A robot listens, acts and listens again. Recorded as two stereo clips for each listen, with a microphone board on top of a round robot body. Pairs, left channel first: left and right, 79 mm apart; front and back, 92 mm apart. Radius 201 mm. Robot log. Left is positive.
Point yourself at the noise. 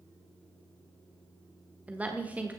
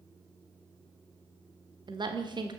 note: The woman speaking: 160° right.
cmd yaw -160
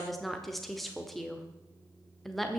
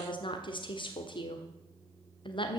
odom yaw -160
end: Found it: a woman speaking, straight ahead.